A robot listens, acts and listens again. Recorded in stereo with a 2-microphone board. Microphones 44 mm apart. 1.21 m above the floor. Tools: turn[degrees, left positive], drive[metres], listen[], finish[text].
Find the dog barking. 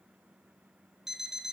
Action: listen[]
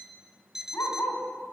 Action: turn[90]
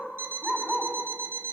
Action: finish[Facing the dog barking.]